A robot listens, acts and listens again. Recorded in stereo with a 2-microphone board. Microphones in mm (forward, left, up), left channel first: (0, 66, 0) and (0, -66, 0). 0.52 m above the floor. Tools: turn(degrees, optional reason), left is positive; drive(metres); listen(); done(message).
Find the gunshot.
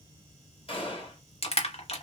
turn(degrees=45, reason="The gunshot: about 45° left or 135° left.")
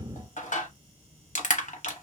listen()
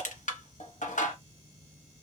done("I heard a gunshot, but can't make it out now. It was about straight ahead or 90° left.")